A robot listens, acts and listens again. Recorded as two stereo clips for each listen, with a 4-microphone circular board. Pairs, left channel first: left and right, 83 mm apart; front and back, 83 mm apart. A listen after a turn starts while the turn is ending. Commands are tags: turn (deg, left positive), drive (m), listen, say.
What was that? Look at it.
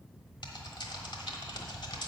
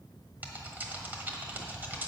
<turn deg="110"/>
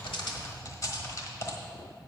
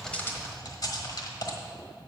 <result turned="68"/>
<turn deg="40"/>
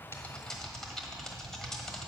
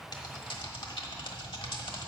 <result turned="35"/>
<say>Found it: typing on a keyboard, straight ahead.</say>